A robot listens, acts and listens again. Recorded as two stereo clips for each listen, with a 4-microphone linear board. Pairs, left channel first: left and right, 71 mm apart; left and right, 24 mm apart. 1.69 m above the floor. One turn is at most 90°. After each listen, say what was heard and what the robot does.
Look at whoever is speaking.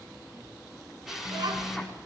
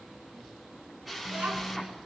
Turn 90° right.
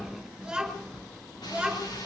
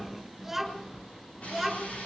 So it is at 10° right. Turn 10° right.
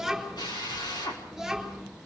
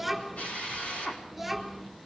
Facing the child speaking.